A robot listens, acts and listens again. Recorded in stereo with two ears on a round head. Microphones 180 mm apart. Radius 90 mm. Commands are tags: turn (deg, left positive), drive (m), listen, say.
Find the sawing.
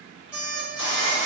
<turn deg="65"/>
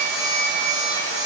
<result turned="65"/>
<turn deg="55"/>
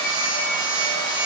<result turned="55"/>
<turn deg="25"/>
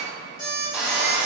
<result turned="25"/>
<say>Found it: sawing, straight ahead.</say>